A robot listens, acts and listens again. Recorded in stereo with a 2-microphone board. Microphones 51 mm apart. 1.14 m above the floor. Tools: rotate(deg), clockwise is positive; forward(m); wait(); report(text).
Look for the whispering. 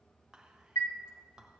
rotate(30)
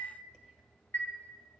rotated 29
wait()
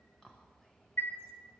rotate(-15)
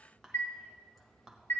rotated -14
report("Facing the whispering.")